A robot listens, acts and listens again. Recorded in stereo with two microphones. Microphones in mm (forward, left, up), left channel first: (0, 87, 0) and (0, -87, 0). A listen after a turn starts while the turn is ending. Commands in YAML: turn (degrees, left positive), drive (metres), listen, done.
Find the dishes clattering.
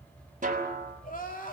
listen: true
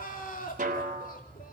listen: true
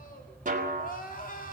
done: "I can't make out dishes clattering, only a snare drum and crying."